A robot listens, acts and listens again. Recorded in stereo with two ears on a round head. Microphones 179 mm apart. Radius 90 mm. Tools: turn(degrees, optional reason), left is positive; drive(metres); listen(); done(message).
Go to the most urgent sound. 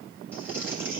listen()
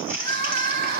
turn(degrees=-50, reason="The crying: about 50° right or 130° right.")
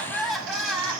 drive(metres=1.0)
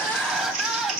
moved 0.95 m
drive(metres=1.0)
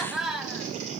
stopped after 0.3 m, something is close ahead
done("I am next to the crying.")